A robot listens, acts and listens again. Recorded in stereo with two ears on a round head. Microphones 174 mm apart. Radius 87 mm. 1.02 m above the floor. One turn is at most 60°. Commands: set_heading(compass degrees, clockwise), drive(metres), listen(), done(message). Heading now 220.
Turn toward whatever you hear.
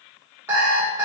set_heading(250)
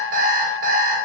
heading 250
set_heading(310)
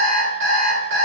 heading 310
set_heading(10)
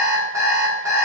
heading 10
set_heading(25)
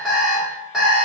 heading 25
done("Facing the alarm clock, 1 to 2 m away.")